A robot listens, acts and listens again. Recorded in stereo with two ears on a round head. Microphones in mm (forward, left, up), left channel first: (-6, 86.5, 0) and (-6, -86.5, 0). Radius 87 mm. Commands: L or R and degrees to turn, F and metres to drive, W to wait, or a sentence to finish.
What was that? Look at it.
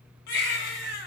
L55
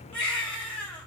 Facing the baby crying.